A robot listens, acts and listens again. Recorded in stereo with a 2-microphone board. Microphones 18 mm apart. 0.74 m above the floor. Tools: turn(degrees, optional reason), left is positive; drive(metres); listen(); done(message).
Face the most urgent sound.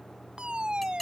turn(degrees=-65, reason="The fire alarm: about 65° right or 115° right.")
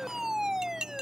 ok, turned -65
turn(degrees=-30, reason="So it is at 30° right.")
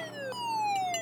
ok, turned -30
done("Found it: a fire alarm, straight ahead.")